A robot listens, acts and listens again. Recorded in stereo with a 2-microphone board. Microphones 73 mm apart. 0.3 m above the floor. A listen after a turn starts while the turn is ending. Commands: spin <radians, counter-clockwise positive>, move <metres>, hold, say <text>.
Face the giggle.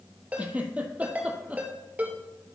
spin -0.35
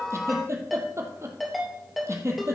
spin -2.44
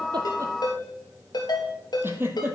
spin -0.52
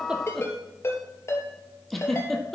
say Found it: a giggle, straight ahead.